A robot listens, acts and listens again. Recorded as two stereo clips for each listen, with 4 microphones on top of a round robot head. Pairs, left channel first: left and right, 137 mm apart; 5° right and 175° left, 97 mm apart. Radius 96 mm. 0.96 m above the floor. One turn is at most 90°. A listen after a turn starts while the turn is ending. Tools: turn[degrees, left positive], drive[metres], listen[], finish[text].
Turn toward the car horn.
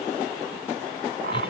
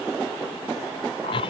Action: listen[]
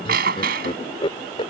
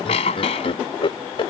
Action: listen[]
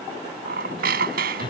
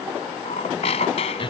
Action: finish[I can't make out a car horn, only laughter and a squeak.]